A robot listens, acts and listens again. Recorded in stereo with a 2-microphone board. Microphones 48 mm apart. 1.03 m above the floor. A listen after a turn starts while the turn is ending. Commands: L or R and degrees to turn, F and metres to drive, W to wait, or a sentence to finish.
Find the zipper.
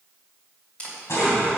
L70
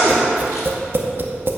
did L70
W
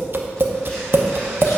W
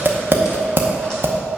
I heard a zipper, but can't make it out now. It was about straight ahead or 40° left.